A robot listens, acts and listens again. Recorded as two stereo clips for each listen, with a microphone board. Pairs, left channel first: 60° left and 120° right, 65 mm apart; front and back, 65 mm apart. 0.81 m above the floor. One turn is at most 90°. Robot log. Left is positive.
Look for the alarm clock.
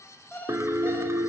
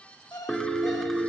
end: Facing the alarm clock.